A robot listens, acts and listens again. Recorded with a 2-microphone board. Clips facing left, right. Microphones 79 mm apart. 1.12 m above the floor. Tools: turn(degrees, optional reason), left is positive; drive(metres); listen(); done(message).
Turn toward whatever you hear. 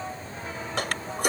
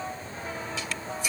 turn(degrees=60, reason="The toilet flushing: about 60° left or 120° left.")
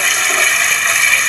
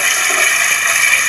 done("Facing the toilet flushing.")